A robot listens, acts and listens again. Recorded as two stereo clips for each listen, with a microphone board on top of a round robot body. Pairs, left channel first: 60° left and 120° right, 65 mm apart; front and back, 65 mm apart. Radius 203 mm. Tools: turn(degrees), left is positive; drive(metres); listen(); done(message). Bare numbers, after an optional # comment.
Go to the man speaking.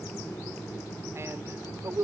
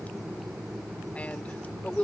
# The man speaking: 70° right.
turn(-70)
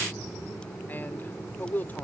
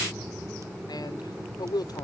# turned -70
drive(1.0)
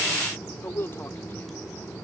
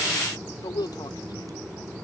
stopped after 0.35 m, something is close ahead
done("Blocked. The man speaking is further on, straight ahead.")